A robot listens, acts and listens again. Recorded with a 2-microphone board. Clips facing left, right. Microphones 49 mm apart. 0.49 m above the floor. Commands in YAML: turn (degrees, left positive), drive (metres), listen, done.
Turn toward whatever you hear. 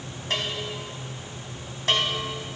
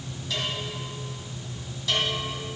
turn: 50
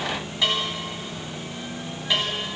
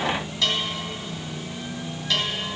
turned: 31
turn: 20
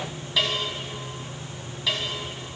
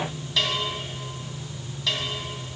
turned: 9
turn: 10
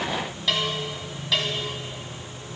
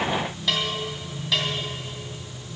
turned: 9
done: "Facing the bell."